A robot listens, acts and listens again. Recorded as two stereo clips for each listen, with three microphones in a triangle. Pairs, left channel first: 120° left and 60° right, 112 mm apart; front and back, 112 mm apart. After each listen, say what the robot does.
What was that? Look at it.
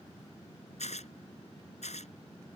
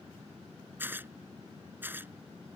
Turn 105° left.
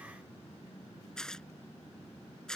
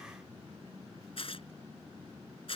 Turn 35° left.
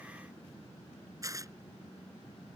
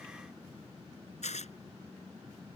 Facing the tearing paper.